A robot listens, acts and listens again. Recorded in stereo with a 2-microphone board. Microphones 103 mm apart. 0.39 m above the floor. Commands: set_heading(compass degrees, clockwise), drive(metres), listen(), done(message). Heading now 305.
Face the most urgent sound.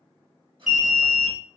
set_heading(335)
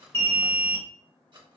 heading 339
set_heading(309)
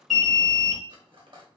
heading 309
done("Found it: an alarm, straight ahead.")